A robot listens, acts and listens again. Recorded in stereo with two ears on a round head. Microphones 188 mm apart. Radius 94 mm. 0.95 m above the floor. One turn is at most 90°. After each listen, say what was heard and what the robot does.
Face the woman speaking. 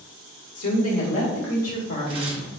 The woman speaking: about 75° left or 105° left. Turn 75° left.
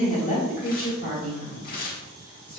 So it is at 50° left. Turn 50° left.
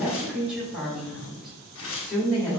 Facing the woman speaking.